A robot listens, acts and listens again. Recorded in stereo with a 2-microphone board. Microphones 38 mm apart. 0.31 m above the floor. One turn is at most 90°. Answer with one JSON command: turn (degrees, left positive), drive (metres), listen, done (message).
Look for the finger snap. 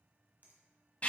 {"turn": -45}
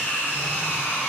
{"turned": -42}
{"listen": true}
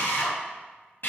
{"listen": true}
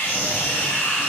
{"done": "I heard a finger snap, but can't make it out now. It was about straight ahead or 95° right."}